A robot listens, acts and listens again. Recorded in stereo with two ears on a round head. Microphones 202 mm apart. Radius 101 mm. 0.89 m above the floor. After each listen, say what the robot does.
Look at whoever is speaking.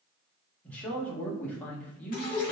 Turn 30° left.
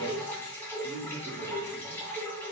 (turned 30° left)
Turn 25° right.
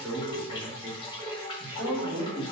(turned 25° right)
Turn 10° right.
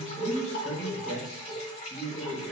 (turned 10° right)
Facing the man speaking.